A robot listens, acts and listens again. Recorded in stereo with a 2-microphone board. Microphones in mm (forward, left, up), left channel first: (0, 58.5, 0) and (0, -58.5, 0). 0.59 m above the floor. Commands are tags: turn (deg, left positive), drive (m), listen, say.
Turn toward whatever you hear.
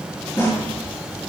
<turn deg="25"/>
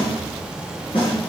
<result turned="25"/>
<turn deg="135"/>
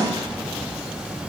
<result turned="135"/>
<turn deg="15"/>
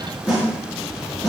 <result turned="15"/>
<say>Facing the snare drum.</say>